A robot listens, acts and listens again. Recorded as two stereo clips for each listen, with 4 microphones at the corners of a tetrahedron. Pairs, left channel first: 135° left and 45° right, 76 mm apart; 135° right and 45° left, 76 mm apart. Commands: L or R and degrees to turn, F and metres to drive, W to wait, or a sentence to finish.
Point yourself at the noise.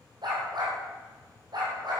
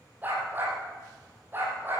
R15
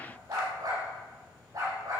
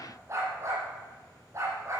Facing the dog barking, over 4 m away.